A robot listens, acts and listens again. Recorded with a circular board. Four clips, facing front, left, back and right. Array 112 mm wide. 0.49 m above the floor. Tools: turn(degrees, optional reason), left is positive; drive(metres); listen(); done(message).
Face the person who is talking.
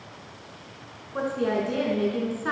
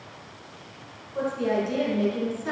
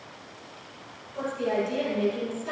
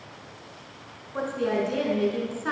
turn(degrees=-40, reason="The woman speaking: 40° right.")
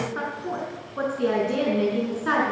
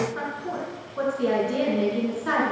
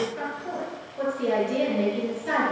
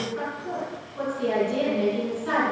turn(degrees=15, reason="The woman speaking is now 15° left.")
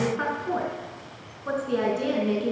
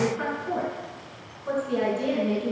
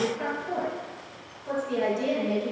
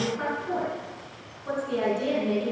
done("Facing the woman speaking.")